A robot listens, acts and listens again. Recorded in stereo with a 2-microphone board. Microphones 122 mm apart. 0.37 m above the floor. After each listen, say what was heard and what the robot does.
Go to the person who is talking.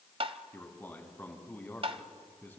The man speaking: about 15° left or 165° left. Turn 15° left.
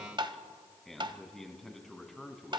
Drive 1.0 m forward.
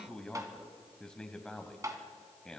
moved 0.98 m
The man speaking is now 10° left. Turn 10° left.
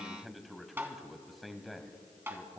Drive 1.0 m forward.
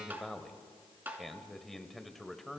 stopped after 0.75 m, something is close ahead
Arrived at the man speaking, straight ahead.